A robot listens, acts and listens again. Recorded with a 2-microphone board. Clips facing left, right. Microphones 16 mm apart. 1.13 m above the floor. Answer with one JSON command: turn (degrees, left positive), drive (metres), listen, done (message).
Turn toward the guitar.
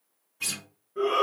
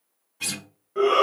{"turn": -20}
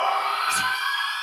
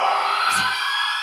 {"listen": true}
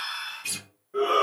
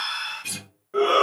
{"done": "Facing the guitar, 2 to 4 m away."}